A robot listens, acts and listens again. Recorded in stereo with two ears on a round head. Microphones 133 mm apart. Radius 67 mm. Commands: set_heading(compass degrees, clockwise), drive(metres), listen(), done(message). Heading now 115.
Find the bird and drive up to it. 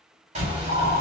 set_heading(160)
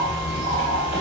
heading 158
set_heading(248)
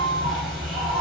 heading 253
drive(1.0)
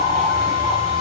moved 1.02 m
drive(1.0)
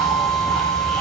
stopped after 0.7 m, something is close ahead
done("Arrived at the bird, straight ahead.")